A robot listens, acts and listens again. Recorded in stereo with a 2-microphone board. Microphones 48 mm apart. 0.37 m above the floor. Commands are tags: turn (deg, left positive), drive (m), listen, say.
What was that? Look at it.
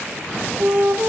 <turn deg="-55"/>
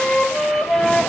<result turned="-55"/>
<say>Found it: a flute, straight ahead, 2 to 4 m away.</say>